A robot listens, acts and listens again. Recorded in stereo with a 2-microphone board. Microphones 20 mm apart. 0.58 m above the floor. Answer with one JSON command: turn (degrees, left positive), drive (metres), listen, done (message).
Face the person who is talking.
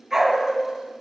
{"listen": true}
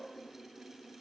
{"listen": true}
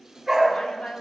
{"turn": 60}
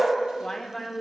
{"turn": 20}
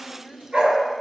{"done": "Found it: a woman speaking, straight ahead."}